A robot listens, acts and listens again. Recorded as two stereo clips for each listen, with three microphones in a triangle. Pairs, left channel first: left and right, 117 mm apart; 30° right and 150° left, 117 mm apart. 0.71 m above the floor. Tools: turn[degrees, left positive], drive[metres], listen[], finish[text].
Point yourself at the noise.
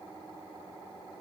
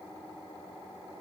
Action: listen[]
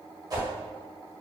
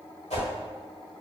Thought: The whoosh: 35° right.
Action: turn[-35]
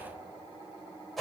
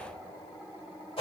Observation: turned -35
Action: finish[Found it: a whoosh, straight ahead, 1 to 2 m away.]